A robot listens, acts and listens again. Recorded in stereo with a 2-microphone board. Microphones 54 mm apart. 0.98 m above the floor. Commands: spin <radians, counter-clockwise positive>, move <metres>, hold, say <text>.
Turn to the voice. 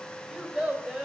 spin -0.26
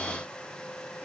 hold
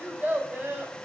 spin -2.62
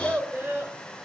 spin -0.61
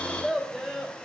say Facing the child speaking.